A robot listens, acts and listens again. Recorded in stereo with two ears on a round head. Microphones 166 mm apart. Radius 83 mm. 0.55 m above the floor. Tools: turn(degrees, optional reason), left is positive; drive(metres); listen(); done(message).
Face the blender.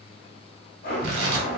turn(degrees=55, reason="The blender: about 55° left or 125° left.")
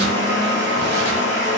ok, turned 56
turn(degrees=70, reason="So it is at 70° left.")
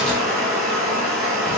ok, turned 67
done("Found it: a blender, straight ahead, 1 to 2 m away.")